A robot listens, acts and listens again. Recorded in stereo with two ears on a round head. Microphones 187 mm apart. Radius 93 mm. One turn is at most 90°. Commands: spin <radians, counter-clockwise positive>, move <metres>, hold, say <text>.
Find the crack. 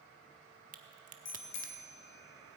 spin -0.70
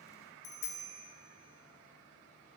hold
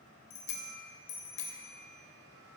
say I heard a crack, but can't make it out now. It was about straight ahead or 100° right.